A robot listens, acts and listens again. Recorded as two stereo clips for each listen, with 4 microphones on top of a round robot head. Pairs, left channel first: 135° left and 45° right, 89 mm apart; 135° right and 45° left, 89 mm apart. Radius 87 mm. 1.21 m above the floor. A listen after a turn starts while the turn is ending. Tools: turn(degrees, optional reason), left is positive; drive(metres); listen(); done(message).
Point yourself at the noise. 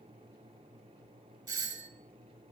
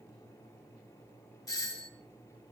turn(degrees=-90, reason="The doorbell: 90° right.")
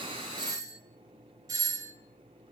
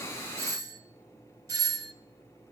done("Found it: a doorbell, straight ahead.")